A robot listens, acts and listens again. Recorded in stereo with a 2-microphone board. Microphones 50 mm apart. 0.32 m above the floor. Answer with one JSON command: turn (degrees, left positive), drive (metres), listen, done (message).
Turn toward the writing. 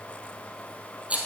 {"listen": true}
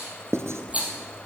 {"turn": -65}
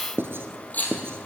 {"turn": -50}
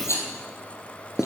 {"turn": -10}
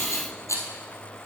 {"listen": true}
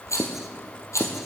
{"done": "Found it: writing, straight ahead."}